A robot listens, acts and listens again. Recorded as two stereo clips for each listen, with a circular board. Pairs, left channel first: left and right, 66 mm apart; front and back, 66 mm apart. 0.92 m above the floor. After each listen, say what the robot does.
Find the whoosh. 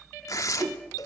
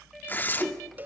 Turn 90° right.
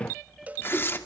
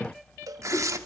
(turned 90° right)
Keep listening.
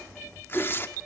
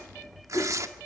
Facing the whoosh, 2 to 4 m away.